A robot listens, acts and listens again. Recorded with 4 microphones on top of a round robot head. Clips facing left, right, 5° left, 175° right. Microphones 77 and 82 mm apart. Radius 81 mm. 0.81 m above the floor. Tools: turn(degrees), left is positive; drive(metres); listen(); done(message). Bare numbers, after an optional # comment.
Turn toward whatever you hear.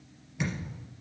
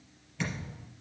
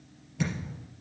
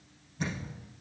# The thud: 15° left.
turn(15)
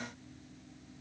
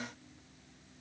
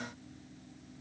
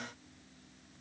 done("Facing where the thud came from. I can't hear it now.")